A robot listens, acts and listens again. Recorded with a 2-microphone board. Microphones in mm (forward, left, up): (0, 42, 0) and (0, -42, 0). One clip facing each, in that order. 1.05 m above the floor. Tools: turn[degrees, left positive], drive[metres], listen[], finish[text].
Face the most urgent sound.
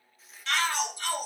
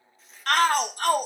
Thought: The shout: about 55° right or 125° right.
Action: turn[-55]
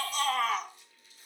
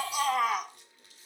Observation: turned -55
Thought: So it is at 10° right.
Action: turn[-10]
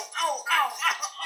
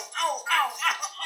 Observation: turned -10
Action: finish[Facing the shout, under 1 m away.]